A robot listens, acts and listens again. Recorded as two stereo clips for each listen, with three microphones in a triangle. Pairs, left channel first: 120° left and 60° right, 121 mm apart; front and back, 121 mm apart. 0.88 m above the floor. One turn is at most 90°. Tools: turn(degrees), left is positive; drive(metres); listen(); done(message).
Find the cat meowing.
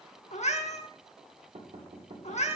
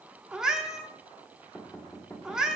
turn(degrees=90)
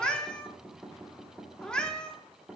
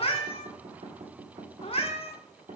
turn(degrees=35)
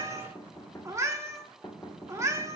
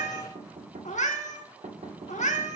done("Found it: a cat meowing, straight ahead, 1 to 2 m away.")